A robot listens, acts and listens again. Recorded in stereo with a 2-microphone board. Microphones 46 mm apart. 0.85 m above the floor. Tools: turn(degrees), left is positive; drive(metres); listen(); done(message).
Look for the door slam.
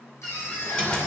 turn(degrees=20)
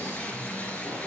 listen()
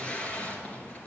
done("I heard a door slam, but can't make it out now. It was about straight ahead or 140° left.")